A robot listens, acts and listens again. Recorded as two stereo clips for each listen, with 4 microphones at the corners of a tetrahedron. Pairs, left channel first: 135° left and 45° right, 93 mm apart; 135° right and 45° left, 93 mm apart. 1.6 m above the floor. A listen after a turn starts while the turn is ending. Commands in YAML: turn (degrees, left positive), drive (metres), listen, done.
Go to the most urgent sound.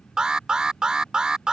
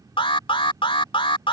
turn: -130
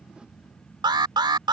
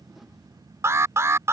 turn: -15
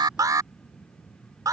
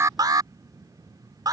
drive: 1.0
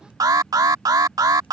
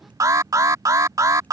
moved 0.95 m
drive: 1.0
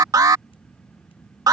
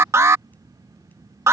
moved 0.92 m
drive: 1.0
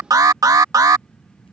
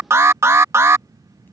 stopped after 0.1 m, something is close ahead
done: "I am next to the alarm."